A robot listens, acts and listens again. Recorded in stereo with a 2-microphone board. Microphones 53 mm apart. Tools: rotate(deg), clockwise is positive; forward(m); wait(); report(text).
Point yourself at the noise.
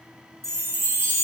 rotate(55)
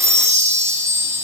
rotate(70)
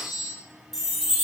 report("Found it: a chime, straight ahead.")